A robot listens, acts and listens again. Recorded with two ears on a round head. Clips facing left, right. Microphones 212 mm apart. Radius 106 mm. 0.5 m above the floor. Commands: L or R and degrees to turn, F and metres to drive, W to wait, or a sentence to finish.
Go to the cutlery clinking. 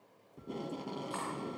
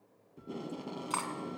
R90
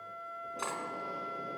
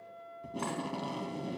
W
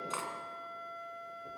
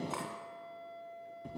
L10
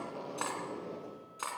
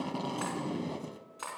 F1.0
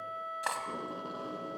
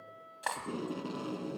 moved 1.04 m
F1.0
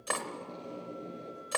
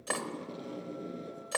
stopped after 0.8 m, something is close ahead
Arrived at the cutlery clinking, straight ahead.